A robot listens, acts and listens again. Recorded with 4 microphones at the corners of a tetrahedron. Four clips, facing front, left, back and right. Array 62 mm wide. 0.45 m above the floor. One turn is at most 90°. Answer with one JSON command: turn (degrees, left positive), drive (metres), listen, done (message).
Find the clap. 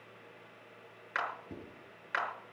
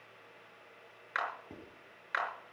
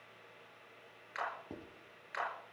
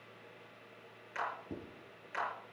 {"turn": 55}
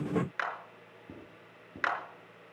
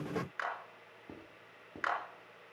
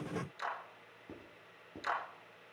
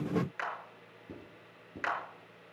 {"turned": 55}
{"done": "Facing the clap."}